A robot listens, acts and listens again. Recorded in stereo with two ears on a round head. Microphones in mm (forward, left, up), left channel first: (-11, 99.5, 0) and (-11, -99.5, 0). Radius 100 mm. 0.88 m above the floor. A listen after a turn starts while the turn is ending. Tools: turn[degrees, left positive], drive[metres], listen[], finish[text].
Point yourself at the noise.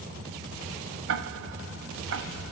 Thought: The ticking: about 70° right or 110° right.
Action: turn[-70]
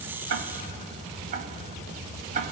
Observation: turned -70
Thought: So it is at 40° right.
Action: turn[-40]
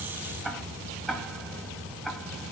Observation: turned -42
Action: finish[Facing the ticking, 1 to 2 m away.]